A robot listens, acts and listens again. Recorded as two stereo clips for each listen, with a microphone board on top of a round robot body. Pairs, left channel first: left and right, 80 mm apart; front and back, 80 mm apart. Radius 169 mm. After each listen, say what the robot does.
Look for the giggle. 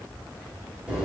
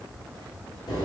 Keep listening.
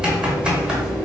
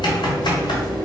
Keep listening.
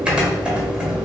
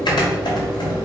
I can't make out a giggle, only typing on a keyboard.